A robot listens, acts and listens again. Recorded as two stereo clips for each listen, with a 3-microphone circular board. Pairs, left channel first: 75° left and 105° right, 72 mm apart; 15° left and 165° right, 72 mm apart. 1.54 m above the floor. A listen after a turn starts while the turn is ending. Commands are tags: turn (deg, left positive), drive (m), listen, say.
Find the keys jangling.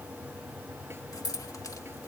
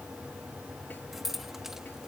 <turn deg="110"/>
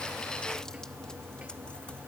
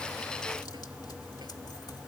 <listen/>
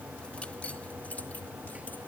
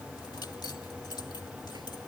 <listen/>
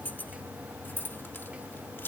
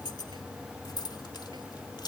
<turn deg="15"/>
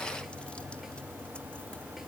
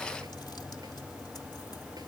<listen/>
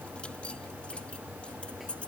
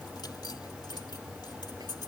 <say>Found it: keys jangling, straight ahead.</say>